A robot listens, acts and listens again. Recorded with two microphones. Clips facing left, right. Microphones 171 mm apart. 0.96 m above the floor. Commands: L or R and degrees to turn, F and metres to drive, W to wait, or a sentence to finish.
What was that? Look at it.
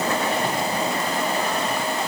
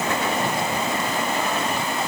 W
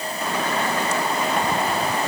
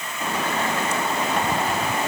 W
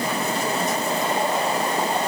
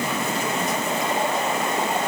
I can't make out anything to turn to.